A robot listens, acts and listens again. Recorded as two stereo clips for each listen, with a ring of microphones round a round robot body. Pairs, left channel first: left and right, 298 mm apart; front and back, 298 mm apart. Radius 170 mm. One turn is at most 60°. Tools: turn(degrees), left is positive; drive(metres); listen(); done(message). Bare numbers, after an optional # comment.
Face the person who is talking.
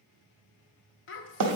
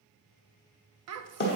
# The child speaking: 140° left.
turn(60)
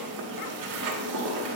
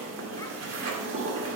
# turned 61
# Nothing new. It was at 80° left.
turn(60)
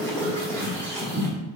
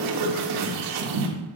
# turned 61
# Nothing new. It was at 20° left.
turn(20)
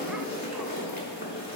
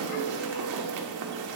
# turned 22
done("I heard a child speaking from this way, but can't make it out now.")